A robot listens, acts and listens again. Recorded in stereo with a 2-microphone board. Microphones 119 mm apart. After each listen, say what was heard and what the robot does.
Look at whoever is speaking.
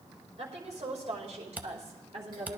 The woman speaking: about 60° right or 120° right. Turn 60° right.
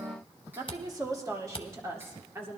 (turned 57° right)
So it is at 20° right. Turn 20° right.
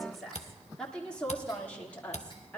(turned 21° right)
The woman speaking is now 10° left. Turn 10° left.
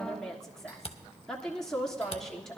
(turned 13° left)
Facing the woman speaking, 1 to 2 m away.